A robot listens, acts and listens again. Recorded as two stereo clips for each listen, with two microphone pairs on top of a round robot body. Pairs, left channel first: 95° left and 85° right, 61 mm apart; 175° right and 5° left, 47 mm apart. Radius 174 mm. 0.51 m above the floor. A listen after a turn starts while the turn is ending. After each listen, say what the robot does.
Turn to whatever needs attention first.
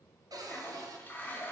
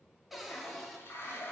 Keep listening.
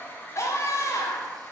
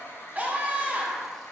Turn 65° left.
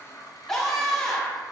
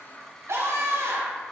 Turn 15° left.
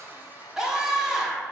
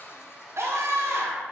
Found it: a scream, straight ahead, 1 to 2 m away.